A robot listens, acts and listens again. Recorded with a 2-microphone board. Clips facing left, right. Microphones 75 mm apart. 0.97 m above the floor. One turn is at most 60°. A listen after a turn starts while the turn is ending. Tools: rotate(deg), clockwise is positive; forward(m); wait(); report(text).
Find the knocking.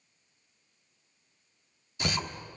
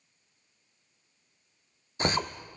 rotate(45)
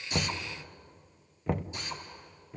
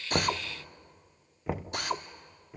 report("Facing the knocking.")